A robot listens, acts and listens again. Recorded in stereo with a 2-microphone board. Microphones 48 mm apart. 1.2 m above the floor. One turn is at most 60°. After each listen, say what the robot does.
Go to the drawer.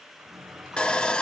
Turn 45° right.
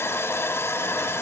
Keep listening.
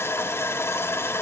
Keep listening.
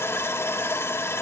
I heard a drawer, but can't make it out now. It was about straight ahead or 90° right. I did not reach it.